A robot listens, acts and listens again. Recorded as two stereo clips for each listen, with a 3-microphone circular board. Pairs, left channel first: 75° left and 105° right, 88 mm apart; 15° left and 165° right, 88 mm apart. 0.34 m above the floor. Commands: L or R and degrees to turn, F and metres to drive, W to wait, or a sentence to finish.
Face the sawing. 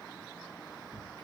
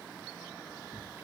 W
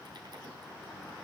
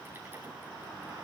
W
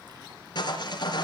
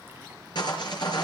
L45
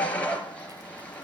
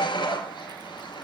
Found it: sawing, straight ahead.